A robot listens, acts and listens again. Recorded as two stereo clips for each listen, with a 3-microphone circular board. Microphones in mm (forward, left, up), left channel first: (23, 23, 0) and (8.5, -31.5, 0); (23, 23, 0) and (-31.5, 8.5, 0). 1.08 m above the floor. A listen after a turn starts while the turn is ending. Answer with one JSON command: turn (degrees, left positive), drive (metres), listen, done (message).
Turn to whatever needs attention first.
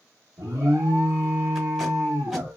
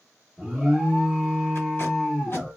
{"turn": -75}
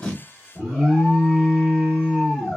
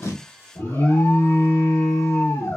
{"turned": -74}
{"done": "Found it: an alarm, straight ahead."}